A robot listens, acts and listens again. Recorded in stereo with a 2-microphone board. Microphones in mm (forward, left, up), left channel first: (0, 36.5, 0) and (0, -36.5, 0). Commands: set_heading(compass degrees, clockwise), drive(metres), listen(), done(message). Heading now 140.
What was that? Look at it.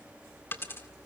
set_heading(110)
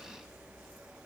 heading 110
listen()
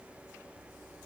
done("I heard a dropped coin, but can't make it out now. It was about straight ahead or 120° left.")